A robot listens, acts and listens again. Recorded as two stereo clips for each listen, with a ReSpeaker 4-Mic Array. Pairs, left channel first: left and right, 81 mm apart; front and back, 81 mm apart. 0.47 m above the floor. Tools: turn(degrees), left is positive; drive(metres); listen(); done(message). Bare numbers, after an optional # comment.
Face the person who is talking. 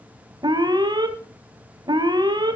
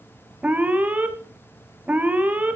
listen()
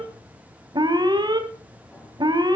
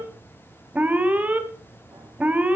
listen()
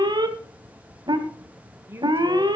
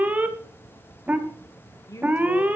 # The woman speaking: 35° right.
turn(-35)
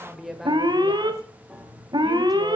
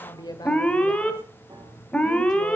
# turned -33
done("Found it: a woman speaking, straight ahead, 1 to 2 m away.")